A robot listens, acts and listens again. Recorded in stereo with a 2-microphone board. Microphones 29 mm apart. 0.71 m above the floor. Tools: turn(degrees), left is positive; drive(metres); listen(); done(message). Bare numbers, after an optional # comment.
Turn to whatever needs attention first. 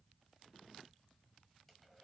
listen()
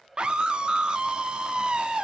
# The scream: about 35° right or 145° right.
turn(-35)
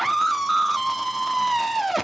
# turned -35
done("Found it: a scream, straight ahead.")